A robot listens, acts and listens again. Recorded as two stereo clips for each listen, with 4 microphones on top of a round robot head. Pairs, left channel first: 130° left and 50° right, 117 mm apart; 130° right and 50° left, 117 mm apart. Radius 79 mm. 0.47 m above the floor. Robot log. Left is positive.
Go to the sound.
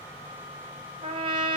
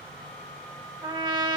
cmd fwd 1.0
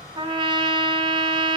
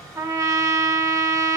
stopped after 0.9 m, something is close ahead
end: Arrived at the trumpet, straight ahead.